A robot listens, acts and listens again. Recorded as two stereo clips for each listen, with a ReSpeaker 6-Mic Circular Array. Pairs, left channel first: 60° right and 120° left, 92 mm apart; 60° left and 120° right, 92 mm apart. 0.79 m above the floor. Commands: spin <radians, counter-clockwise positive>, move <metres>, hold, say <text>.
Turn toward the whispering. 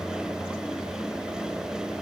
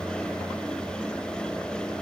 hold
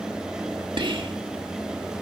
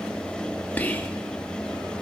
spin 2.27
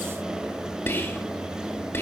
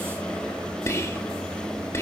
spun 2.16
say Found it: whispering, straight ahead, 1 to 2 m away.